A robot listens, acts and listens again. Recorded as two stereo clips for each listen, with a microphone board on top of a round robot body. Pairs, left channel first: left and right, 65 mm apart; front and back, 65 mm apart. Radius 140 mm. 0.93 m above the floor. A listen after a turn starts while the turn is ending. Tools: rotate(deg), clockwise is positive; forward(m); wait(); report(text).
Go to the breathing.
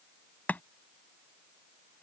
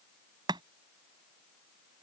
wait()
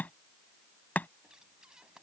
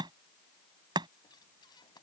rotate(10)
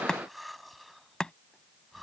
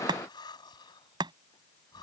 forward(1.0)
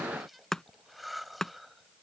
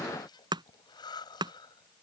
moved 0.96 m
forward(1.0)
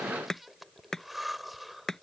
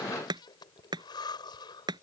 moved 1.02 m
forward(1.0)
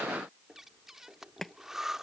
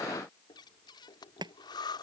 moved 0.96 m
forward(1.0)
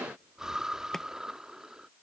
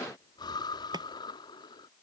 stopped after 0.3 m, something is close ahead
rotate(10)
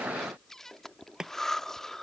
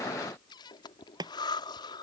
report("I am next to the breathing.")